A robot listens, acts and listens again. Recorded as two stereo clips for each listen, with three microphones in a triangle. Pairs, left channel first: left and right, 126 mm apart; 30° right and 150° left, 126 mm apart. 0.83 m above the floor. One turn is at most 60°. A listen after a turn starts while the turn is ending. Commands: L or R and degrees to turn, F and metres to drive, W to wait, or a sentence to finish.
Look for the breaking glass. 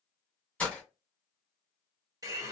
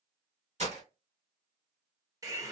L60
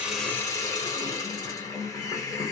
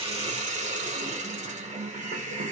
L60
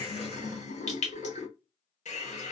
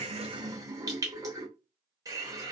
L50
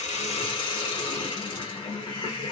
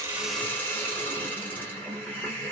Facing where the breaking glass came from. I can't hear it now.